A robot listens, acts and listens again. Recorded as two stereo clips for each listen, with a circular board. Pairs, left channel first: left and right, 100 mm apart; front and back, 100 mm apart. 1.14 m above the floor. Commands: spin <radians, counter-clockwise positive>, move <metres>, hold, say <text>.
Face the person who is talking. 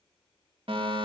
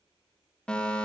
hold
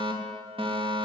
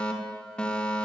hold
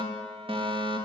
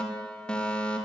say I can't make out anyone speaking to turn to.